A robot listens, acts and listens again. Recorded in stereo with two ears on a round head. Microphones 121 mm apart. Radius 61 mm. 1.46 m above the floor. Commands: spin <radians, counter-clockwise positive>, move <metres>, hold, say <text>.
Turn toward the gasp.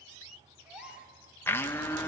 spin -0.52
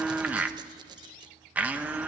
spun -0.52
hold
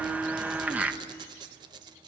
say I heard a gasp, but can't make it out now. It was about 20° left or 140° right.